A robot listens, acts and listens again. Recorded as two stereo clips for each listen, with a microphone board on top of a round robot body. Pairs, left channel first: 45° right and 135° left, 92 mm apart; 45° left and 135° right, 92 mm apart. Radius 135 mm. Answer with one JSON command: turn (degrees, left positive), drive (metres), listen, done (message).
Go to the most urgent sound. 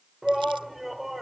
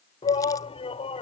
{"turn": 45}
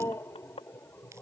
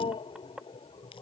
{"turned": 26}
{"turn": 20}
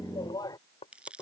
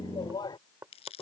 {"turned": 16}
{"drive": 1.0}
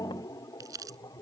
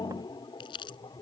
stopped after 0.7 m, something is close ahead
{"done": "Blocked. The shout is further on, straight ahead."}